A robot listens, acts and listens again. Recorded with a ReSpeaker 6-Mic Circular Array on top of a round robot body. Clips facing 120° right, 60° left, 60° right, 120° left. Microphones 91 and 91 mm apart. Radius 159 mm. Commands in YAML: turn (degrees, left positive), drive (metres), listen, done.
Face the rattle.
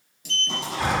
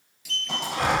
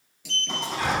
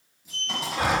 turn: 35
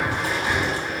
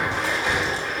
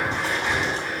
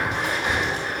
listen: true
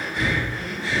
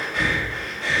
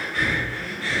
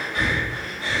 listen: true
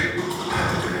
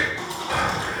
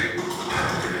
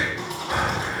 done: "I heard a rattle from this way, but can't make it out now."